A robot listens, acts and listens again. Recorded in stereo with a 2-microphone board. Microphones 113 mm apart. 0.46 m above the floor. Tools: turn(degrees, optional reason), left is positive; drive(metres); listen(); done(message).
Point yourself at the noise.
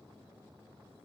listen()
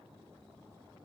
listen()
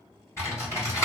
turn(degrees=25, reason="The typing on a keyboard: about 25° left or 155° left.")
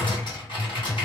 turn(degrees=125, reason="So it is at 125° left.")
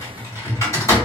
turn(degrees=35, reason="The typing on a keyboard is now 35° left.")
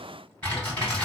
turn(degrees=15, reason="The typing on a keyboard is now 15° left.")
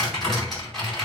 done("Found it: typing on a keyboard, straight ahead.")